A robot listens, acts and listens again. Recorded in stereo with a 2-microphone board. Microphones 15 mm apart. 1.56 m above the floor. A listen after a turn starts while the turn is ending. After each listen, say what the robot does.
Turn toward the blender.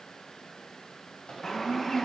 Turn 25° right.
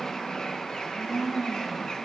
Found it: a blender, straight ahead, over 4 m away.